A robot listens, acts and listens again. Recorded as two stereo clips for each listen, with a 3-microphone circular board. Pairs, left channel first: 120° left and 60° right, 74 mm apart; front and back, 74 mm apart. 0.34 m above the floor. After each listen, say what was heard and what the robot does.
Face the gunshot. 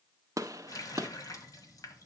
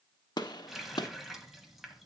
The gunshot: 20° right. Turn 20° right.
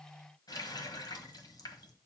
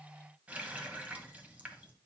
I heard a gunshot from this way, but can't make it out now.